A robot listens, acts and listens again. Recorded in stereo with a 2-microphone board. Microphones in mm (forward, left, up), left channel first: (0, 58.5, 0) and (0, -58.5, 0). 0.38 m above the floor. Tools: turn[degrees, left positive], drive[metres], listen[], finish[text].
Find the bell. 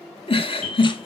Thought: The bell: about 40° right or 140° right.
Action: turn[-40]
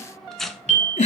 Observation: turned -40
Thought: So it is at 100° right.
Action: turn[-100]
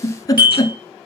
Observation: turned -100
Thought: The bell is now 40° right.
Action: turn[-40]
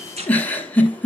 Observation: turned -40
Action: listen[]
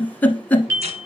Thought: The bell is now 25° right.
Action: turn[-25]
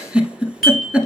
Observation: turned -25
Action: finish[Found it: a bell, straight ahead.]